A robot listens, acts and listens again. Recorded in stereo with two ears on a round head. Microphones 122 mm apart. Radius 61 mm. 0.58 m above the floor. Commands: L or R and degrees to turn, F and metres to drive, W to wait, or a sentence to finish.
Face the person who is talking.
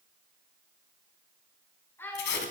L15
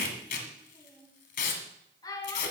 L150
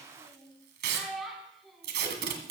Facing the child speaking, over 4 m away.